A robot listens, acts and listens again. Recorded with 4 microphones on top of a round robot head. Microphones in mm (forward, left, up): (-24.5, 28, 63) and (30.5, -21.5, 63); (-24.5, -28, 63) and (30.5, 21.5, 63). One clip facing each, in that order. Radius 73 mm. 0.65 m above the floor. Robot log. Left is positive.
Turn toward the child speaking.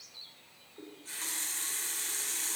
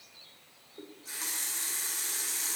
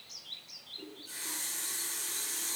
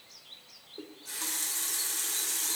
cmd idle
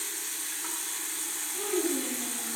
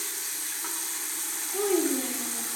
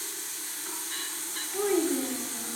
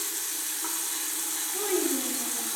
note: The child speaking: 55° right.
cmd yaw -55
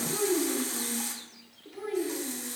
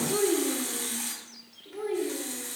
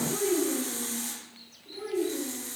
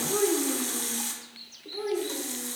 note: The child speaking is now 10° left.
cmd yaw +10
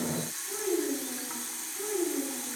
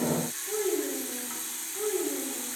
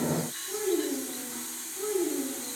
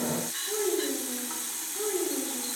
end: Facing the child speaking, 1 to 2 m away.